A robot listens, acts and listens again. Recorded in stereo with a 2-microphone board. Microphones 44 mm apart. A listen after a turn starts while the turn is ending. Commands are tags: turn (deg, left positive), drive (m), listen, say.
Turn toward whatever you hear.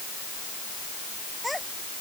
<turn deg="30"/>
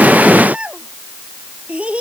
<turn deg="-25"/>
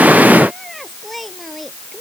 <say>Found it: a child speaking, straight ahead.</say>